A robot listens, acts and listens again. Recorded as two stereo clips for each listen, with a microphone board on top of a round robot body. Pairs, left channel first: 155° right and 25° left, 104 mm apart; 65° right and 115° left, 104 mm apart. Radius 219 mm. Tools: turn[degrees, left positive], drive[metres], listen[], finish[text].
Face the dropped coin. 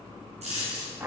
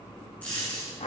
Thought: The dropped coin: 10° left.
Action: turn[10]
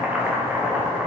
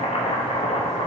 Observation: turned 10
Action: finish[Facing where the dropped coin came from. I can't hear it now.]